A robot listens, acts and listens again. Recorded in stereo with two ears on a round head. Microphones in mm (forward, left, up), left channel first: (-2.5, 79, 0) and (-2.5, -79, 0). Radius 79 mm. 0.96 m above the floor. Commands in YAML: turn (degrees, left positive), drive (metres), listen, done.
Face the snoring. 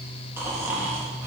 turn: -30
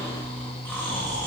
turn: 15
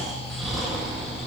done: "Found it: snoring, straight ahead, 1 to 2 m away."